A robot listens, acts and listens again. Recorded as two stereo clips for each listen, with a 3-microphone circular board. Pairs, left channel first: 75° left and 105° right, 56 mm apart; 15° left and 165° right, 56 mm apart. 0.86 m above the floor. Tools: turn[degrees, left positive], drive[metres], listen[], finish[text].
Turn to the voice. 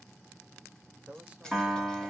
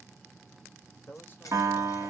Thought: The man speaking: 40° right.
Action: turn[-40]
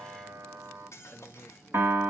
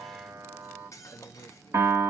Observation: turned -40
Action: finish[Found it: a man speaking, straight ahead, under 1 m away.]